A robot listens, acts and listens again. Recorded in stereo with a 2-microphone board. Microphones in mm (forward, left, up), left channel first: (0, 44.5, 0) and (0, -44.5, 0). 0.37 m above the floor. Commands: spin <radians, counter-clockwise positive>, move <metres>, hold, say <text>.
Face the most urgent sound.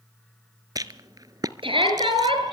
spin -1.57
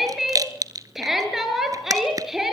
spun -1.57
say Facing the shout, over 4 m away.